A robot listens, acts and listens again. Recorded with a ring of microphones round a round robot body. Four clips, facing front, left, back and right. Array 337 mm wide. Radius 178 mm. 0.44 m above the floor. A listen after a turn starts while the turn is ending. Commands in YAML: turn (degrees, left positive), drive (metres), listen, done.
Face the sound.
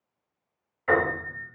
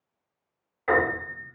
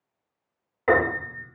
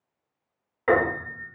turn: -145
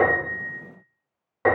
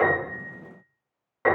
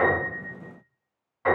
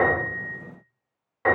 turn: 15
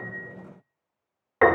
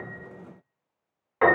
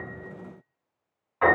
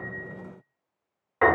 done: "Found it: a piano, straight ahead, under 1 m away."